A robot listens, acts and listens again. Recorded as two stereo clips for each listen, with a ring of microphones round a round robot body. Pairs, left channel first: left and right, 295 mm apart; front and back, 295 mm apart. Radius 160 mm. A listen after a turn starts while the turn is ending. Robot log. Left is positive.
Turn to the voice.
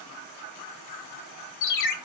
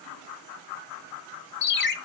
cmd idle
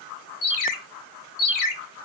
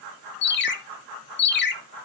cmd idle
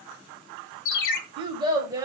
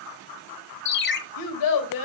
note: The child speaking: 10° right.
cmd yaw -10
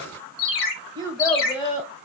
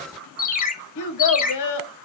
note: The child speaking is now 15° left.
cmd yaw +15
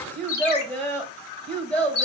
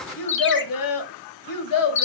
end: Facing the child speaking, 1 to 2 m away.